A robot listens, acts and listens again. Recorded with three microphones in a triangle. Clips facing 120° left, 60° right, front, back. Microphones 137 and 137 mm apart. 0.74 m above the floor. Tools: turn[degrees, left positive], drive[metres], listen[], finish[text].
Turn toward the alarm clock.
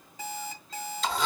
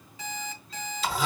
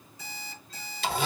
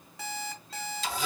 Thought: The alarm clock: 170° left.
Action: turn[170]
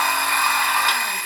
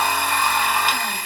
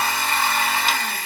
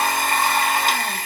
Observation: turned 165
Action: listen[]
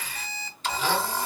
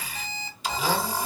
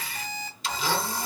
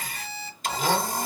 Action: finish[Found it: an alarm clock, straight ahead.]